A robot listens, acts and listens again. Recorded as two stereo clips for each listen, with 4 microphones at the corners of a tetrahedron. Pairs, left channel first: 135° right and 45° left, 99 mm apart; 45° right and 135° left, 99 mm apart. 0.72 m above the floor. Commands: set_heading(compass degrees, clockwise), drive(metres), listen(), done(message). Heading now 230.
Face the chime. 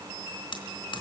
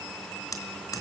listen()
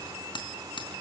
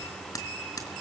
listen()
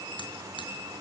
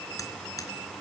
done("I can't make out a chime, only hammering.")